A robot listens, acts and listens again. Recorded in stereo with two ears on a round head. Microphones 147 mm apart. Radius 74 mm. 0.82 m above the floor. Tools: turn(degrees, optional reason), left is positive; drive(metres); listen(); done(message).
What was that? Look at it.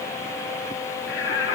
turn(degrees=75, reason="The singing: about 75° left or 105° left.")
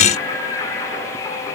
turn(degrees=25, reason="So it is at 25° left.")
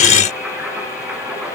turn(degrees=-10, reason="The singing is now 10° right.")
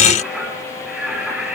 done("Facing the singing.")